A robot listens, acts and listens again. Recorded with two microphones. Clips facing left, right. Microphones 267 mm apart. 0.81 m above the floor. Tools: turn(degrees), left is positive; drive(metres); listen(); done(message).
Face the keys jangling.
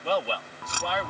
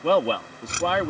turn(degrees=-25)
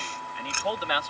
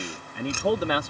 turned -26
turn(degrees=-135)
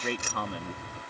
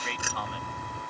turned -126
turn(degrees=-10)
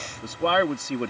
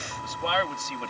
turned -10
listen()
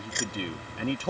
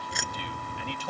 done("Facing the keys jangling.")